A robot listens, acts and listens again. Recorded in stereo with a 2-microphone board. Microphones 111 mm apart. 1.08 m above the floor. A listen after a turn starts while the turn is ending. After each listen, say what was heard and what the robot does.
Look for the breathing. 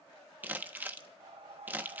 The breathing: about 70° right or 110° right. Turn 70° right.
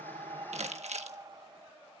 So it is at 40° right. Turn 40° right.
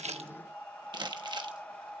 The breathing is now 10° left. Turn 10° left.
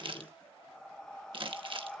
Facing the breathing.